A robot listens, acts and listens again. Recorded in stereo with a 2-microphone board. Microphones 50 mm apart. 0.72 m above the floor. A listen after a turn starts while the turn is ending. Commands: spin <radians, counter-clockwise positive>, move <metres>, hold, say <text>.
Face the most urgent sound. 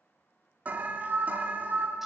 spin -0.61
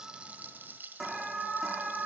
say Found it: an alarm, straight ahead, 2 to 4 m away.